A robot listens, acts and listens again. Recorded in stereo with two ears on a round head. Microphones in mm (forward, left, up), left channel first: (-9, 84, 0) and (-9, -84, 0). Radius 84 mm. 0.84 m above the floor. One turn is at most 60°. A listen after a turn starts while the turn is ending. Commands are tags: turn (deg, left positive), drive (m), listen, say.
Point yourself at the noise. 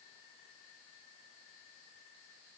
<listen/>
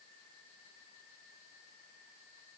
<listen/>
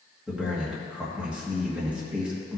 <turn deg="-30"/>
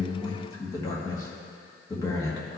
<turn deg="25"/>
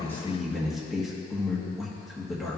<say>Found it: a man speaking, straight ahead.</say>